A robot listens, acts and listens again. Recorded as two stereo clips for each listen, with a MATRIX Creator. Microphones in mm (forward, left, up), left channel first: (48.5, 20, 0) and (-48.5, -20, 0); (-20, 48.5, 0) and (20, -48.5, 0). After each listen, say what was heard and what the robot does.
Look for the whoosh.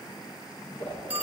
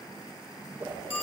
Found it: a whoosh, straight ahead, 2 to 4 m away.